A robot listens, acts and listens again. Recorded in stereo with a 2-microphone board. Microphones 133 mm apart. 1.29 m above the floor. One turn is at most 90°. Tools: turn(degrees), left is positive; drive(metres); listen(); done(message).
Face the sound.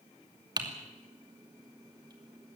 turn(degrees=-30)
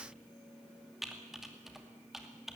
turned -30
done("Found it: typing on a keyboard, straight ahead, 2 to 4 m away.")